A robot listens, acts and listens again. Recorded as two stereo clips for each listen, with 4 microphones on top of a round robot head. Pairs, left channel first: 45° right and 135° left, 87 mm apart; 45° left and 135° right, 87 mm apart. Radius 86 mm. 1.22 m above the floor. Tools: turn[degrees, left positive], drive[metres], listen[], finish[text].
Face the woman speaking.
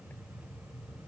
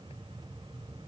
Action: listen[]
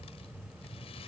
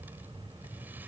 Action: listen[]
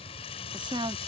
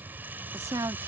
Thought: The woman speaking: 170° left.
Action: turn[170]
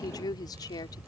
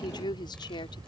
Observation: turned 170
Action: finish[Facing the woman speaking.]